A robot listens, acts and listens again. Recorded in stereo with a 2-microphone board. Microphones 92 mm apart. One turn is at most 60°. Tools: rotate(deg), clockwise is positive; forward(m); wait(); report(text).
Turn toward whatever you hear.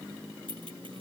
rotate(60)
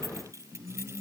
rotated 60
rotate(30)
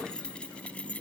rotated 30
rotate(-15)
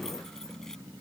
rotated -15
wait()
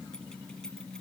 wait()
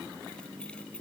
report("I heard keys jangling from this way, but can't make it out now.")